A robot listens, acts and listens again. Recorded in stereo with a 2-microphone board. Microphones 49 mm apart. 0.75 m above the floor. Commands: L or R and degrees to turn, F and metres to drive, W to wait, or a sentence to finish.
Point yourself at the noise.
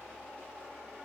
W
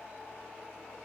W
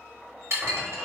R70
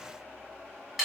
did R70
Found it: dishes clattering, straight ahead.